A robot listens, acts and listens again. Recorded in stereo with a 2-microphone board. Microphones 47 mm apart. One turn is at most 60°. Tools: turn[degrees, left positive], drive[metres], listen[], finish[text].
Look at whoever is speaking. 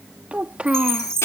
Thought: The child speaking: about 30° right or 150° right.
Action: turn[-30]
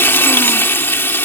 Action: listen[]
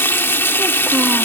Action: listen[]
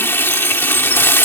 Action: finish[I heard a child speaking, but can't make it out now. It was about straight ahead or 120° right.]